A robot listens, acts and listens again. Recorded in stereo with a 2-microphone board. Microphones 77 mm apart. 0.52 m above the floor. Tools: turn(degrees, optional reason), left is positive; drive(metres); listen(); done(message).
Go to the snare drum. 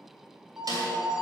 turn(degrees=-55, reason="The snare drum: about 55° right or 125° right.")
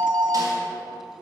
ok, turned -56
listen()
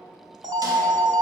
listen()
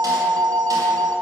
done("I heard a snare drum, but can't make it out now. It was about straight ahead or 65° right. I did not reach it.")